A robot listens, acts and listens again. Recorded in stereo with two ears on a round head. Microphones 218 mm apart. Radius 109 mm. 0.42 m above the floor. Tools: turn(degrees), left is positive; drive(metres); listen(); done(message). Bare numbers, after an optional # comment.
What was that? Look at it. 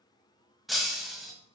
turn(30)
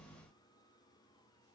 listen()
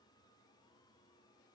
done("I heard breaking glass, but can't make it out now. It was about 30° right or 150° left.")